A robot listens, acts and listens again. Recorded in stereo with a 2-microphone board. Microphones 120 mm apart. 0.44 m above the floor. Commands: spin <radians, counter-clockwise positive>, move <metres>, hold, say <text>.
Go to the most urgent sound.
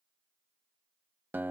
hold
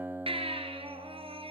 spin -0.87
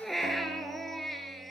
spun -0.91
move 1.0
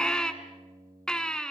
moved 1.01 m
move 1.0
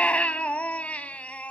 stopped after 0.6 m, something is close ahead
spin 0.17
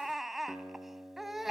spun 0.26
say Arrived at the baby crying, straight ahead.